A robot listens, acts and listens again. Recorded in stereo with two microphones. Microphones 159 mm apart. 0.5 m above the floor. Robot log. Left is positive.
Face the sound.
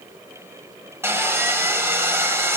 cmd yaw -30
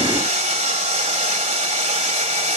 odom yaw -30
note: So it is at 135° right.
cmd yaw -135
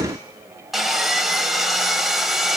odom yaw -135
end: Facing the sawing.